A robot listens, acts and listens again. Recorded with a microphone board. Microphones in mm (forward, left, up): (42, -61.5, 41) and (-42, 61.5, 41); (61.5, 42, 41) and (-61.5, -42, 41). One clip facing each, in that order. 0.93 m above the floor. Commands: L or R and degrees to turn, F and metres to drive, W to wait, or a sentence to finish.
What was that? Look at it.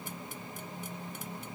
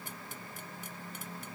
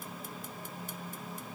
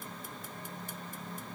W
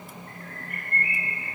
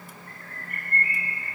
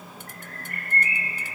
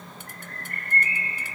L165
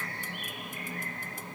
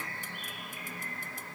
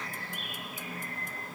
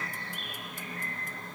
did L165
R50
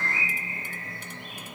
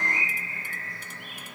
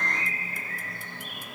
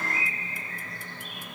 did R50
L10
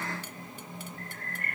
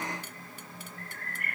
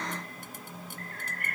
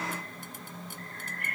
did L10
Found it: a bird, straight ahead.